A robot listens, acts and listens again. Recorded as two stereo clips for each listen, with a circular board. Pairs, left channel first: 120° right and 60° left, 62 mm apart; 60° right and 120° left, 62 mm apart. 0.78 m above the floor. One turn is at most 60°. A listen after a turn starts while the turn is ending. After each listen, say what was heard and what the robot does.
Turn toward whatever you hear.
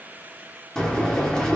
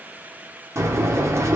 The breathing: 160° left. Turn 60° left.
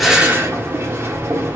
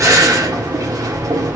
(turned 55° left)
The breathing is now 105° left. Turn 60° left.
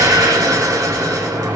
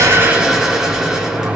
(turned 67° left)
The breathing is now 40° left. Turn 40° left.
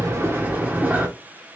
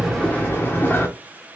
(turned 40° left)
Facing the breathing.